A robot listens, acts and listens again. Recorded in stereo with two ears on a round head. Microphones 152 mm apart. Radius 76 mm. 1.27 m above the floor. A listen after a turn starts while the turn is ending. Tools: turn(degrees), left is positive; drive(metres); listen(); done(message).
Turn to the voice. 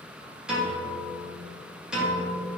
listen()
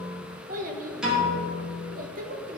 turn(degrees=-50)
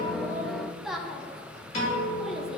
done("Facing the child speaking, under 1 m away.")